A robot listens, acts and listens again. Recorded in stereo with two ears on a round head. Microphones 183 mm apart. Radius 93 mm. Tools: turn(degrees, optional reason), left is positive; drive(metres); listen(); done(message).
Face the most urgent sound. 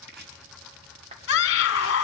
turn(degrees=55, reason="The scream: about 55° left or 125° left.")
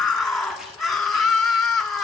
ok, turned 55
done("Found it: a scream, straight ahead, 2 to 4 m away.")